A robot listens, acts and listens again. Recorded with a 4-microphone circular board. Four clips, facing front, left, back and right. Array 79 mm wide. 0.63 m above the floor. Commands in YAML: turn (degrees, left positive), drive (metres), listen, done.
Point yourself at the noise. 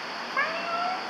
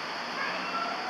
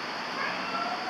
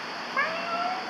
turn: -50
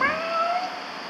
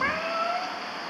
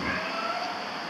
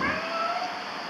turn: 10
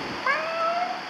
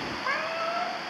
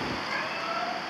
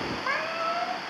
done: "Facing the cat meowing."